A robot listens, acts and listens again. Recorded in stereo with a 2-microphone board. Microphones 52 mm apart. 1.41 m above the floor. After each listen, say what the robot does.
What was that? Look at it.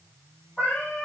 Turn 25° left.
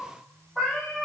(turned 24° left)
Found it: a cat meowing, straight ahead.